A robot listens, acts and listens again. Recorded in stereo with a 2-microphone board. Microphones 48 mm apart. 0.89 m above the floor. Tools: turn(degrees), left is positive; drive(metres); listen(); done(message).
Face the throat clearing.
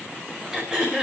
turn(degrees=-30)
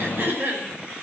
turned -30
turn(degrees=-135)
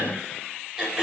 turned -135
turn(degrees=-15)
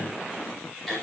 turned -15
done("Facing the throat clearing.")